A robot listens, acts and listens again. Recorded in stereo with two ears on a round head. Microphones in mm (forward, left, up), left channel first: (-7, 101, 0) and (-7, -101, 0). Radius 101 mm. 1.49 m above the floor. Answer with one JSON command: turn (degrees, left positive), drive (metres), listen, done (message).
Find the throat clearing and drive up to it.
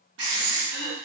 {"turn": -30}
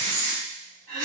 {"turn": -135}
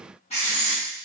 {"listen": true}
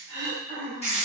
{"turn": -10}
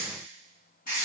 {"listen": true}
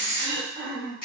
{"drive": 1.0}
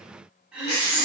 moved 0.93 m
{"drive": 1.0}
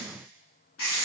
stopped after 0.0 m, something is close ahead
{"listen": true}
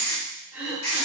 {"done": "Arrived at the throat clearing, straight ahead."}